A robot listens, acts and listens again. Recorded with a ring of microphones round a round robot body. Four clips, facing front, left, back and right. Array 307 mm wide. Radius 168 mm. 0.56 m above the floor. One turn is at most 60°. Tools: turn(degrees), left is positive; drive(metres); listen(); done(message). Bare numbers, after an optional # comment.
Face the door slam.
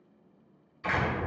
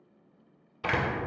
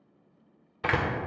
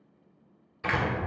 # The door slam: 170° left.
turn(60)
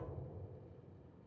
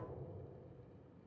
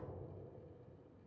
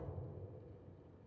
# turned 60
# Nothing new. It was at 110° left.
turn(60)
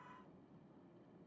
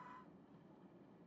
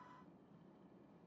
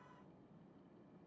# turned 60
# Nothing new. It was at 50° left.
turn(50)
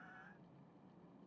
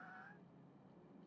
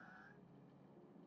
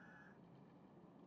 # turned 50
done("I heard a door slam from this way, but can't make it out now.")